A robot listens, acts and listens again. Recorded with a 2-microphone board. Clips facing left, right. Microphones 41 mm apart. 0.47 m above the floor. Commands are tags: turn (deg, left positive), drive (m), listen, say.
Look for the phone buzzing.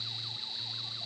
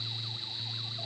<listen/>
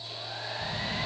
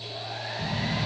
<turn deg="-60"/>
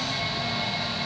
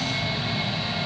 <say>Found it: a phone buzzing, straight ahead.</say>